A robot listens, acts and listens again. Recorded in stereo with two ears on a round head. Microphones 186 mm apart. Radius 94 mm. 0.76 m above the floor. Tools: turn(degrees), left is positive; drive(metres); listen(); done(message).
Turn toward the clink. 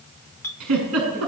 turn(degrees=30)
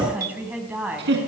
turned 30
listen()
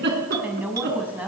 listen()
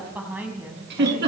done("I heard a clink, but can't make it out now. It was about 15° right or 135° left.")